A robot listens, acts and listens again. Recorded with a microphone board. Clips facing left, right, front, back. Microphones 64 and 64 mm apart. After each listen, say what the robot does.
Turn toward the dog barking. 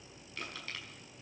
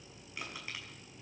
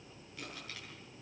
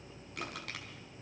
Keep listening.
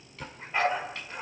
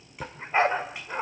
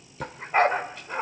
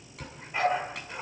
Turn 45° right.
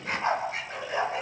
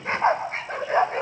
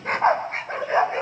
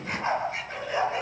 Turn 50° right.
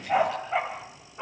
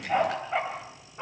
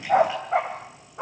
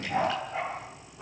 Found it: a dog barking, straight ahead, 2 to 4 m away.